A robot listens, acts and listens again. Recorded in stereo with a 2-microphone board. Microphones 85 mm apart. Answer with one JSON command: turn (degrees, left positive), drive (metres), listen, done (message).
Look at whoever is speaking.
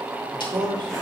{"turn": -90}
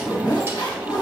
{"listen": true}
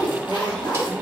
{"listen": true}
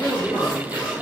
{"turn": 15}
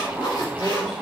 {"listen": true}
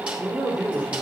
{"done": "Facing the man speaking, 2 to 4 m away."}